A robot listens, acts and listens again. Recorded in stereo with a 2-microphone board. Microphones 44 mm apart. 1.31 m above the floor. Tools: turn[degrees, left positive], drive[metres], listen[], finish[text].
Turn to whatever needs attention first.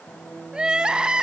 Thought: The crying: about 20° right or 160° right.
Action: turn[-20]
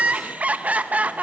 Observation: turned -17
Thought: So it is at 145° right.
Action: turn[-145]
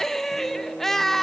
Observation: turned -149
Action: finish[Found it: crying, straight ahead.]